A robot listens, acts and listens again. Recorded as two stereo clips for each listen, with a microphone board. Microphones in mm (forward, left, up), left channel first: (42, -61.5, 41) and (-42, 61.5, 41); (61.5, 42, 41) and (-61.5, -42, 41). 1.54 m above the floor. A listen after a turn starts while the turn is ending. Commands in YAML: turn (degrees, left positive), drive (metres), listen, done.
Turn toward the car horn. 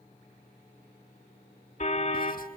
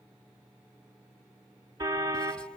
turn: -80
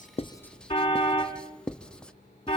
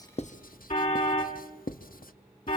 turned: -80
done: "Found it: a car horn, straight ahead, 2 to 4 m away."